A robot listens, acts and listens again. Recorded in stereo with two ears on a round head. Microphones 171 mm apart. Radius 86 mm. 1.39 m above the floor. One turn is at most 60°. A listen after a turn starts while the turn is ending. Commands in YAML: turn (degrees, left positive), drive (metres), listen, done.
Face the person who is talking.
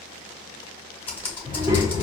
turn: -15
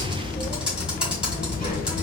turn: -25
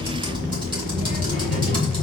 turn: -60
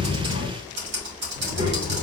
turn: -60
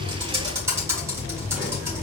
done: "Found it: a child speaking, straight ahead."